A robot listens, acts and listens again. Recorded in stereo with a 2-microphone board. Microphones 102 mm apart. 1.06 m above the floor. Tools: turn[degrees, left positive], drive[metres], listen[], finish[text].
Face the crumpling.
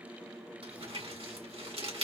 Thought: The crumpling: about 65° right or 115° right.
Action: turn[-65]
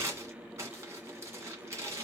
Thought: So it is at 30° right.
Action: turn[-30]
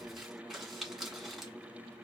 Action: finish[Facing the crumpling.]